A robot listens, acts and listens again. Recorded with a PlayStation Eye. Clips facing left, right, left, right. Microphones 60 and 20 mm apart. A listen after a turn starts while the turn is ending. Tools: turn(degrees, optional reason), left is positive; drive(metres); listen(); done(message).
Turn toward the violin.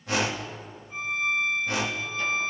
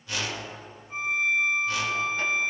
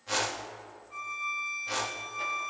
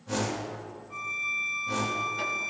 turn(degrees=-25, reason="The violin: about 25° right or 155° right.")
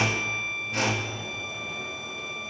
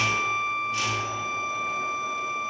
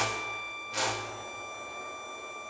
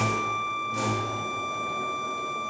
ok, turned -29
turn(degrees=-120, reason="So it is at 120° right.")
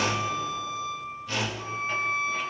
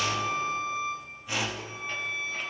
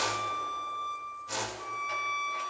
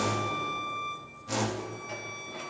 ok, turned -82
turn(degrees=-40, reason="The violin is now 40° right.")
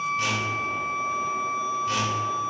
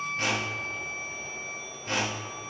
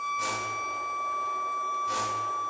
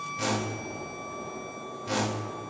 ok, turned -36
done("Found it: a violin, straight ahead.")